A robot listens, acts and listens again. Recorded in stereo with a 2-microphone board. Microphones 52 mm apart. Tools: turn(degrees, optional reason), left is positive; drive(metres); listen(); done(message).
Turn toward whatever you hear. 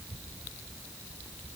listen()
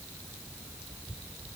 listen()
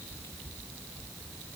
done("I can't make out anything.")